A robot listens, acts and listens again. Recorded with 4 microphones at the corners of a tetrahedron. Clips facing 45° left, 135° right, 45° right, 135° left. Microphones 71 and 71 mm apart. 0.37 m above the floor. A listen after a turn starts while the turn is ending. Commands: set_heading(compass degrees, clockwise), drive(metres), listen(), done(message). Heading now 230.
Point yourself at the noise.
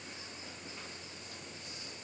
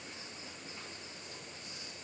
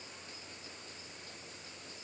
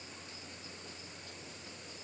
listen()
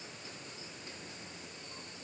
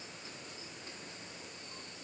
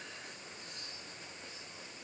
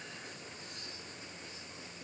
listen()
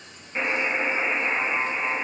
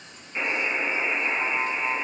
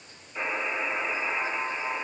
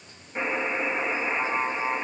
set_heading(125)
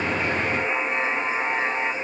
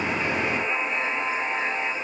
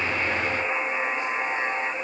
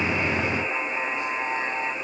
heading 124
done("Found it: a buzzer, straight ahead, 1 to 2 m away.")